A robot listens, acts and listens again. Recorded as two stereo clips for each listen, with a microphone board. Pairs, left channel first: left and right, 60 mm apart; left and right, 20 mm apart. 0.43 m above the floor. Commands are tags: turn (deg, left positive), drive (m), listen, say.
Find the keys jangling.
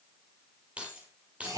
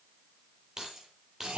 <turn deg="-20"/>
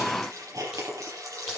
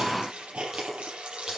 <listen/>
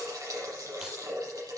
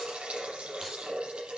<listen/>
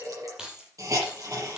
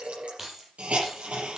<turn deg="-30"/>
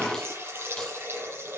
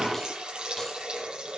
<listen/>
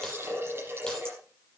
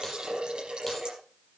<listen/>
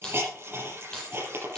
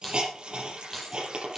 <turn deg="15"/>
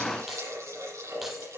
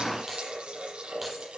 <listen/>
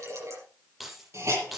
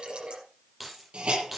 <say>Found it: keys jangling, straight ahead, over 4 m away.</say>